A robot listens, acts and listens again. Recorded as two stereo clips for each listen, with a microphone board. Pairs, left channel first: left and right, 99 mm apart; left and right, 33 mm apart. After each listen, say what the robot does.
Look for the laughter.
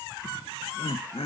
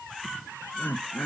Turn 90° left.
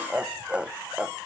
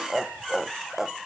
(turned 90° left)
Turn 10° right.
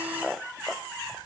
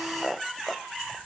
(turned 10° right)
Found it: laughter, straight ahead.